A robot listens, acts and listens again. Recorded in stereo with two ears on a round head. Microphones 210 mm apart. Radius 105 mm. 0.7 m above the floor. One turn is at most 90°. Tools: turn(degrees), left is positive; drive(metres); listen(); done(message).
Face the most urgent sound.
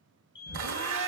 turn(degrees=15)
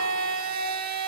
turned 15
listen()
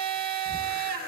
listen()
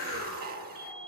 done("I heard a fire alarm, but can't make it out now. It was about straight ahead or 150° left.")